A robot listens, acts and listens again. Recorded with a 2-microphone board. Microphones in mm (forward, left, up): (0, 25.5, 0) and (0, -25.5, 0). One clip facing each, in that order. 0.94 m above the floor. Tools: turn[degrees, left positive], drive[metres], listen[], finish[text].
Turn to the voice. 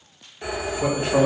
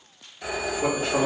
Thought: The man speaking: about 45° left or 135° left.
Action: turn[45]
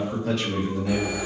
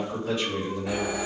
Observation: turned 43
Thought: So it is at 80° left.
Action: turn[80]
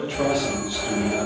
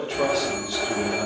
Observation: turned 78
Action: finish[Facing the man speaking.]